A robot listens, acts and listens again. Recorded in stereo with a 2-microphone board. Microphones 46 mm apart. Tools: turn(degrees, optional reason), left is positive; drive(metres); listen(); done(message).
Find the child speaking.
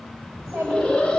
turn(degrees=-75, reason="The child speaking: about 75° right or 105° right.")
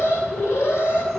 listen()
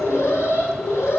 listen()
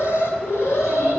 done("I heard a child speaking, but can't make it out now. It was about straight ahead or 30° right.")